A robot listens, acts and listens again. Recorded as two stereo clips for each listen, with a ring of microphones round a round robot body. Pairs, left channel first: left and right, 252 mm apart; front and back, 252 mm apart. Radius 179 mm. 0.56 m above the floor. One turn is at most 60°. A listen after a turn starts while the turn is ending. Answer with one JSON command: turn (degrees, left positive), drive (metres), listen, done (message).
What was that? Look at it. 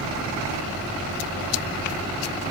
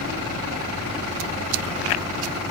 {"listen": true}
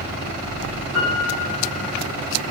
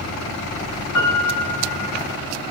{"done": "Found it: a piano, straight ahead, over 4 m away."}